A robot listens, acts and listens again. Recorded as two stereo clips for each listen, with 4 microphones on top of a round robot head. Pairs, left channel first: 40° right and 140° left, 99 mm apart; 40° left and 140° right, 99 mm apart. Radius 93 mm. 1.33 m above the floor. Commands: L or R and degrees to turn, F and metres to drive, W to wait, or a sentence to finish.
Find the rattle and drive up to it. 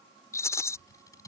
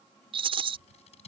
R105
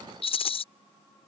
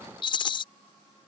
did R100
F1.0
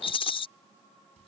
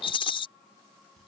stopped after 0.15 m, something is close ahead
Blocked. The rattle is further on, straight ahead.